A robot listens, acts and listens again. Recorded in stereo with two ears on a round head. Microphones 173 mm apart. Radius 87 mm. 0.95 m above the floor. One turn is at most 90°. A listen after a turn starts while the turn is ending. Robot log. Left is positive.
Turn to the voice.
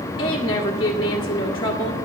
note: The woman speaking: about 25° left or 155° left.
cmd yaw +25
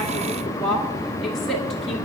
end: Found it: a woman speaking, straight ahead.